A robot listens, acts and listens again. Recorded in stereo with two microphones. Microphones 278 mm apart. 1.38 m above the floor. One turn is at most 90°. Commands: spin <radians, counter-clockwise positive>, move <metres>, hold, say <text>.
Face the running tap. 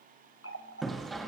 spin 0.87
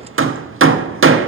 hold
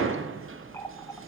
hold
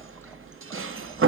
say I heard a running tap, but can't make it out now. It was about straight ahead or 80° left.